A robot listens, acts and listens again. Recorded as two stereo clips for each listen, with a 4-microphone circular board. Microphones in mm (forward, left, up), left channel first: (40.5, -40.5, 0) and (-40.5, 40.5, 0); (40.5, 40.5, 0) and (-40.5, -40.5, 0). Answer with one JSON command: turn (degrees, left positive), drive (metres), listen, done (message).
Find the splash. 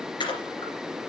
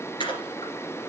{"done": "Facing the splash, 2 to 4 m away."}